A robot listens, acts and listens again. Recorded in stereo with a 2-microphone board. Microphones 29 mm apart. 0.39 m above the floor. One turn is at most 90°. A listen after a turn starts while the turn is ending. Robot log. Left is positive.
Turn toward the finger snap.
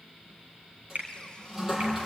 note: The finger snap: about 65° right or 115° right.
cmd yaw -65
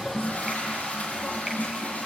cmd idle
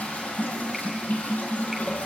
cmd idle
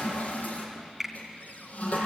end: Found it: a finger snap, straight ahead.